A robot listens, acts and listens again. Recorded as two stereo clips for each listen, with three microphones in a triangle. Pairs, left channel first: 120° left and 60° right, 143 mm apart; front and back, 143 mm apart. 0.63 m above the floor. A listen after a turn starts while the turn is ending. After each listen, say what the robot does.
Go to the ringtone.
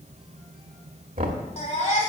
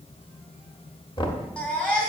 Keep listening.
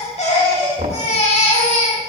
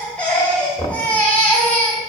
Keep listening.
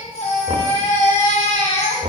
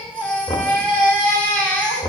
I can't make out a ringtone to turn to.